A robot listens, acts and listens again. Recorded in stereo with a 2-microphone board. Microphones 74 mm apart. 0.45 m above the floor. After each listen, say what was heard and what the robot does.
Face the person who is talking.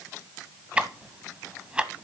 Keep listening.
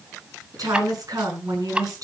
The woman speaking: about 55° right or 125° right. Turn 55° right.
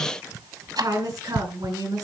So it is at 65° right. Turn 65° right.
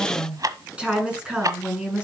The woman speaking is now 15° right. Turn 15° right.
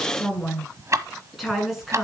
Found it: a woman speaking, straight ahead.